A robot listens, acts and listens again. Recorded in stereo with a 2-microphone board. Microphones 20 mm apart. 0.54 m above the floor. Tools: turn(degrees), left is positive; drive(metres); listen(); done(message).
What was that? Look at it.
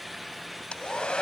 turn(degrees=60)
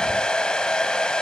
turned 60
turn(degrees=55)
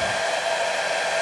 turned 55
turn(degrees=10)
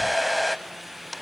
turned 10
done("Found it: a hair dryer, straight ahead, under 1 m away.")